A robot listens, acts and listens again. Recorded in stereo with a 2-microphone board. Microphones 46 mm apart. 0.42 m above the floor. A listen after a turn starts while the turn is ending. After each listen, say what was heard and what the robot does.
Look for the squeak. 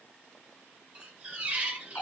The squeak: about 30° right or 150° right. Turn 30° right.
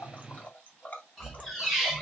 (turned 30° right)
Facing the squeak, 1 to 2 m away.